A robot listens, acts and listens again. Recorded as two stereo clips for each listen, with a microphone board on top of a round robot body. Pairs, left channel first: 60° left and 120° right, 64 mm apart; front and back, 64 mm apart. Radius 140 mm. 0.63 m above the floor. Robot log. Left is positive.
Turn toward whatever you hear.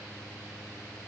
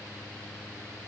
cmd idle
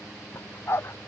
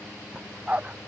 note: The dog barking: 110° left.
cmd yaw +110
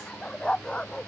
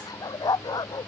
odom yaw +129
note: The dog barking is now 20° right.
cmd yaw -20
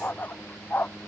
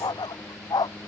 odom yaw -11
end: Found it: a dog barking, straight ahead.